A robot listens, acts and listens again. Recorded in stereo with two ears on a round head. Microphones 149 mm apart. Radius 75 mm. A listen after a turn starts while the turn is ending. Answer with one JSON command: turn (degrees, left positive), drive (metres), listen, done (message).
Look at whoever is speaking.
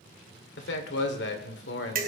{"turn": 90}
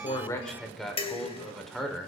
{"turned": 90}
{"done": "Found it: a man speaking, straight ahead."}